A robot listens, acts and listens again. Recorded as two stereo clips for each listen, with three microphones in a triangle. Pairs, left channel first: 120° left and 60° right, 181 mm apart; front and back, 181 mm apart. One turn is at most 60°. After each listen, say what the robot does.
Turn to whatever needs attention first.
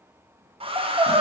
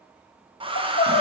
Facing the crying.